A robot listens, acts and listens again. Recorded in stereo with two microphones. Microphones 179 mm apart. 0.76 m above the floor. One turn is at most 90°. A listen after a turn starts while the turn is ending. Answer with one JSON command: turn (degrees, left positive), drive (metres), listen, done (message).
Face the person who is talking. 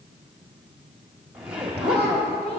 {"turn": 35}
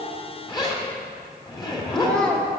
{"done": "Facing the child speaking."}